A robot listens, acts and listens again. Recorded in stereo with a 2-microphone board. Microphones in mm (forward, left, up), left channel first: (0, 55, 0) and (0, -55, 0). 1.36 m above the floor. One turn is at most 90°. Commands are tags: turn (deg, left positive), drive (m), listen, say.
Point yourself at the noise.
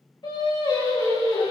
<turn deg="50"/>
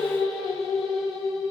<say>Found it: singing, straight ahead, over 4 m away.</say>